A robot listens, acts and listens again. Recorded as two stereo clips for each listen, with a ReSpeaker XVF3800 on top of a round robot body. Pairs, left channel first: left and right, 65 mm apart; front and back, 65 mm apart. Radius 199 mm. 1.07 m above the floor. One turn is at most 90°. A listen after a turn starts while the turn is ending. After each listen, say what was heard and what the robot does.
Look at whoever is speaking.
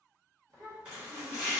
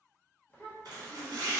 The child speaking: 70° right. Turn 70° right.
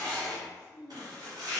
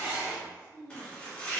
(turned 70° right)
Found it: a child speaking, straight ahead.